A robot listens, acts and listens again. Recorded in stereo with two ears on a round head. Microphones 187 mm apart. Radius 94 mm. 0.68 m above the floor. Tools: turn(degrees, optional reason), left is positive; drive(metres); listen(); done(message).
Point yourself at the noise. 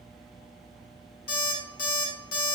turn(degrees=45, reason="The alarm clock: about 45° left or 135° left.")
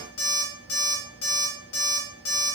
turn(degrees=85, reason="So it is at 85° left.")
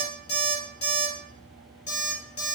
turn(degrees=30, reason="The alarm clock is now 30° left.")
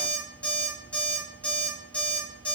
turn(degrees=10, reason="The alarm clock is now 10° left.")
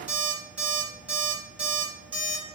done("Facing the alarm clock.")